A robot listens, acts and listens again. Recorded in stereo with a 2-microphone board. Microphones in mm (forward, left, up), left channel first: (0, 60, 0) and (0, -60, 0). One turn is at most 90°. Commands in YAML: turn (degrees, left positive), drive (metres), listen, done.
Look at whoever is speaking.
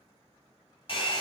listen: true
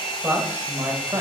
turn: -35
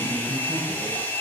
turn: -20
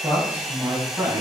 turn: -30
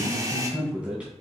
turn: -10
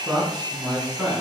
done: "Found it: a man speaking, straight ahead."